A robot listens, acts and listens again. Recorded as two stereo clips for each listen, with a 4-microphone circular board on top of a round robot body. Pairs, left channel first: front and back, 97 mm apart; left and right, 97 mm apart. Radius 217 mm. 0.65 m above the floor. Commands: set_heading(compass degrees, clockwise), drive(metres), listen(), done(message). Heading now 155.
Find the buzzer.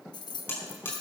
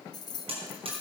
set_heading(225)
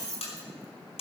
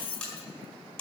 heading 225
set_heading(215)
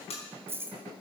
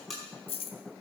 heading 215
done("Found it: a buzzer, straight ahead.")